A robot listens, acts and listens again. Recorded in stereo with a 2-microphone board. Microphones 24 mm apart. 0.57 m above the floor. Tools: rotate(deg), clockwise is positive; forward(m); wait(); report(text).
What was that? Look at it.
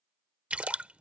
rotate(70)
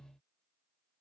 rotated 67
wait()
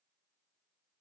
report("I heard a splash, but can't make it out now. It was about straight ahead or 45° right.")